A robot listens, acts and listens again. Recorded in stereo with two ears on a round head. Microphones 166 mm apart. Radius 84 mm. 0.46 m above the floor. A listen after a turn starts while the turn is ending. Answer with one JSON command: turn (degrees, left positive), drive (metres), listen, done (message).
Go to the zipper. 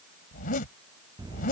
{"turn": 50}
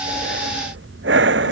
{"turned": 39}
{"listen": true}
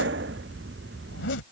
{"turn": 85}
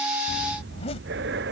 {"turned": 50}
{"turn": 35}
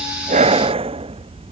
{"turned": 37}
{"listen": true}
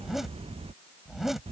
{"drive": 1.0}
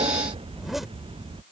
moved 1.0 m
{"listen": true}
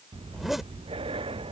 {"drive": 1.0}
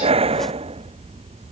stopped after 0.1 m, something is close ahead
{"listen": true}
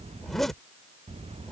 {"done": "I am next to the zipper."}